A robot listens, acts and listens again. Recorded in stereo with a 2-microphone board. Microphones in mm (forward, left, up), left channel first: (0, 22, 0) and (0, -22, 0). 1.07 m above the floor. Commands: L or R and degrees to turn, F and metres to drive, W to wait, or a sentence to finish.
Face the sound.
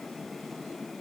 W
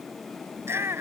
R90
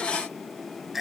Facing the shout.